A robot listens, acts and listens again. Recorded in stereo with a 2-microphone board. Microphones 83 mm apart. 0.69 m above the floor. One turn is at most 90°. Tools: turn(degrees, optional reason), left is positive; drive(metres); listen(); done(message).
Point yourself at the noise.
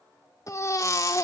turn(degrees=40, reason="The baby crying: about 40° left or 140° left.")
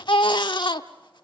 turn(degrees=90, reason="So it is at 95° left.")
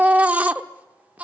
turn(degrees=-20, reason="The baby crying is now 20° right.")
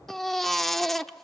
done("Facing the baby crying, 1 to 2 m away.")